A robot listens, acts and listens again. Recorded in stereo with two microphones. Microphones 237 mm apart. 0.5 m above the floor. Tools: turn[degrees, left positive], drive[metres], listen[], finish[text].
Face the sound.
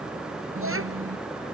Thought: The child speaking: about 65° right or 115° right.
Action: turn[-65]
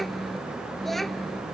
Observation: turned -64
Action: finish[Facing the child speaking.]